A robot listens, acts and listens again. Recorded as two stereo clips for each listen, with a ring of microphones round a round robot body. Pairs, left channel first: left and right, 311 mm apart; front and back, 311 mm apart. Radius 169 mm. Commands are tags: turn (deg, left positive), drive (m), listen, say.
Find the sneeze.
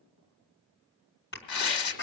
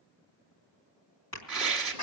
<turn deg="35"/>
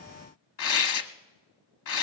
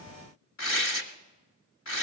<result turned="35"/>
<say>I heard a sneeze from this way, but can't make it out now.</say>